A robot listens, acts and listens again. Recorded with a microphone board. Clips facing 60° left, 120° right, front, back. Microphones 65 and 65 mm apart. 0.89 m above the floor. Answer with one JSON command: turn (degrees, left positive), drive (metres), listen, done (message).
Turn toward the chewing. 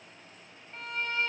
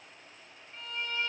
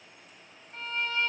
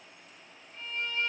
{"listen": true}
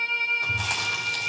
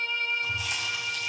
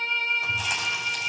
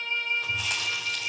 {"turn": 80}
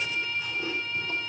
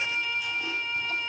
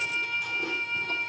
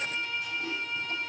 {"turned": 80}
{"done": "Facing the chewing, 2 to 4 m away."}